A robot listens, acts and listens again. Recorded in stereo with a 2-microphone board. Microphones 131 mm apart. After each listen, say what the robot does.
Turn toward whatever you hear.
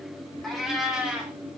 Turn 30° right.
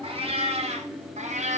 Turn 115° right.
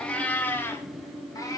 Turn 30° left.
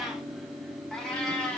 Found it: a cat meowing, straight ahead.